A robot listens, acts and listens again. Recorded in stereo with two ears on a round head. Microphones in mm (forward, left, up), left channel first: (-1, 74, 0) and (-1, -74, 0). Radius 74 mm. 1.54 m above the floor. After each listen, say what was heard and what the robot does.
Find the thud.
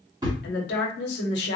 The thud: about 25° right or 155° right. Turn 25° right.
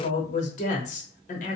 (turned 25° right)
Keep listening.
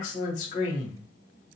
I heard a thud, but can't make it out now. It was about straight ahead or 130° right.